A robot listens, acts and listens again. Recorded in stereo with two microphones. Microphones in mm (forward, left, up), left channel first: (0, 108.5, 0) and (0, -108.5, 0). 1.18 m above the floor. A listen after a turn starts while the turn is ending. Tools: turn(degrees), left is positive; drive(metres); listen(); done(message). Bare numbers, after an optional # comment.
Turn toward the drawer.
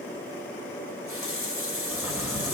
turn(-30)
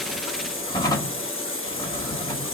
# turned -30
# So it is at 20° left.
turn(20)
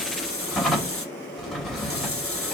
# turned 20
done("Found it: a drawer, straight ahead, 1 to 2 m away.")